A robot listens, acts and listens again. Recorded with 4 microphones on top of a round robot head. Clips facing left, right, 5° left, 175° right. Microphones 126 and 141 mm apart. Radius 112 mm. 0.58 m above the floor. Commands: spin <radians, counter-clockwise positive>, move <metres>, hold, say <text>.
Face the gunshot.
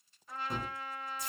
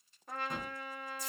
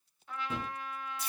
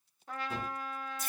say Found it: a gunshot, straight ahead.